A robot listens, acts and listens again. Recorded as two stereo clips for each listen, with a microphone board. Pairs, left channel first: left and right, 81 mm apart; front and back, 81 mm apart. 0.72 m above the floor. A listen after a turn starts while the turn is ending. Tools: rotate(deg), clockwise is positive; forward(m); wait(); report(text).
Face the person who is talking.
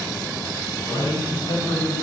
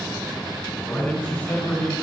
rotate(-70)
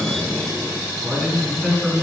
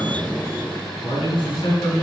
report("Facing the man speaking, over 4 m away.")